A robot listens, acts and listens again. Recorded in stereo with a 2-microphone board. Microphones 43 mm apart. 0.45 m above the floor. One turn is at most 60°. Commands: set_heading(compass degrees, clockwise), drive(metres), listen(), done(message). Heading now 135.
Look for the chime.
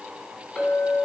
listen()
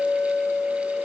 listen()
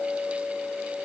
done("I can't make out a chime, only a clink.")